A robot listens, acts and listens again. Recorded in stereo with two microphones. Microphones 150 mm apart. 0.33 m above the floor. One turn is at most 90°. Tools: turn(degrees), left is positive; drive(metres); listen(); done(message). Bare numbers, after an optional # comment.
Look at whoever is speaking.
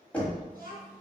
# The child speaking: about 75° right or 105° right.
turn(-75)
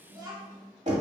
# So it is at 30° right.
turn(-30)
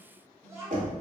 # The child speaking is now 20° right.
turn(-20)
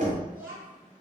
# The child speaking is now 20° right.
turn(-20)
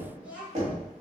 # The child speaking is now 10° right.
turn(-10)
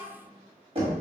done("Found it: a child speaking, straight ahead.")